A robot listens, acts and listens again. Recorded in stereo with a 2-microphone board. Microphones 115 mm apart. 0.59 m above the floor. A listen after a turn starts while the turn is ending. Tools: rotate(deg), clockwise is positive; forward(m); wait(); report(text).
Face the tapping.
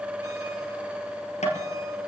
rotate(-90)
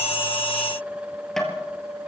report("Found it: tapping, straight ahead, 2 to 4 m away.")